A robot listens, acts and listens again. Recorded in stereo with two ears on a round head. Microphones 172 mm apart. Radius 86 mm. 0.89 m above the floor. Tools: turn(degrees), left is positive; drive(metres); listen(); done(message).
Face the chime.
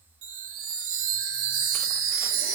turn(degrees=-70)
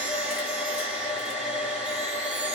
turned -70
listen()
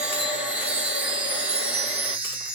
done("Facing the chime.")